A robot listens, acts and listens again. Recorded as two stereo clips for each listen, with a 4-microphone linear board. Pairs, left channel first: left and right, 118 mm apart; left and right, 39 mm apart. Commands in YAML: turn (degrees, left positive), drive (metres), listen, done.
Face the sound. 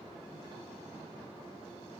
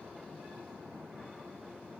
listen: true
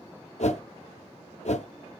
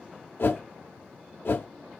turn: 70
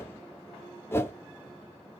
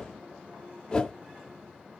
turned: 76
turn: 20
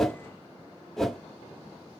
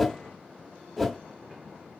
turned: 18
done: "Found it: a whoosh, straight ahead, under 1 m away."